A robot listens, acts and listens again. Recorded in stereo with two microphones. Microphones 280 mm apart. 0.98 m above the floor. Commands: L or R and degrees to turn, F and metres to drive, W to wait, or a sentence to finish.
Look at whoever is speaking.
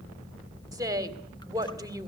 R30
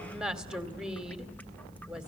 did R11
Found it: a woman speaking, straight ahead, 2 to 4 m away.